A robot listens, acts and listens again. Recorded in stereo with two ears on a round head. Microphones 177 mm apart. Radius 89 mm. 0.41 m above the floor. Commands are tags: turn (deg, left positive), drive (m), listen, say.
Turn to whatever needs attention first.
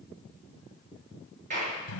<listen/>
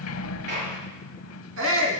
<turn deg="-90"/>
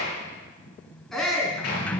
<say>Found it: a shout, straight ahead, 2 to 4 m away.</say>